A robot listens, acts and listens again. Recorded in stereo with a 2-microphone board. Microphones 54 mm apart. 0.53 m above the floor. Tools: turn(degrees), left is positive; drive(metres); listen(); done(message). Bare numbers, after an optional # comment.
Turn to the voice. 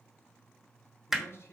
# The man speaking: about 50° left or 130° left.
turn(50)
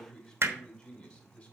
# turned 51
# So it is at 20° left.
turn(20)
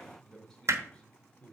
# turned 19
# The man speaking is now 20° left.
turn(20)
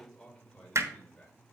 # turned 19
# The man speaking is now 15° left.
turn(15)
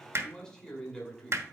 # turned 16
# The man speaking is now 10° left.
turn(10)
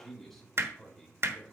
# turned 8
done("Facing the man speaking.")